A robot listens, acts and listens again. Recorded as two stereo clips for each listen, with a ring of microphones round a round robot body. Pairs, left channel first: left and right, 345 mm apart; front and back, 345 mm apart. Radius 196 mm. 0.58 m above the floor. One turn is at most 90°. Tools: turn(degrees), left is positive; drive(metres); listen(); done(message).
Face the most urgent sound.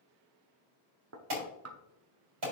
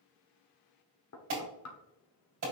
turn(degrees=-90)
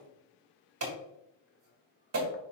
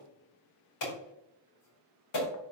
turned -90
turn(degrees=-45)
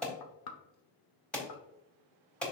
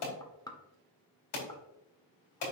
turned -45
done("Found it: an alarm, straight ahead, 2 to 4 m away.")